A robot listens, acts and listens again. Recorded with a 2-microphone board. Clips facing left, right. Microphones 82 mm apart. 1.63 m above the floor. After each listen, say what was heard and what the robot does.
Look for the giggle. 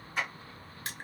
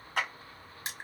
Keep listening.
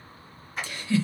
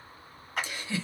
The giggle: about 15° right or 165° right. Turn 15° right.
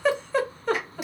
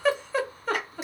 Found it: a giggle, straight ahead, under 1 m away.